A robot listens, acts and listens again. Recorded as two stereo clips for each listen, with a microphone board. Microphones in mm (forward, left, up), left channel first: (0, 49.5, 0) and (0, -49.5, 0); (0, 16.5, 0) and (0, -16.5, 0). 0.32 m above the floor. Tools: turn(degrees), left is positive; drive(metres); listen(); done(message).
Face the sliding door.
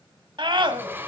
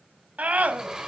turn(degrees=-20)
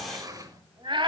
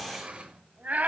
turn(degrees=-140)
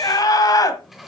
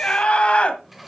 done("Found it: a sliding door, straight ahead, 2 to 4 m away.")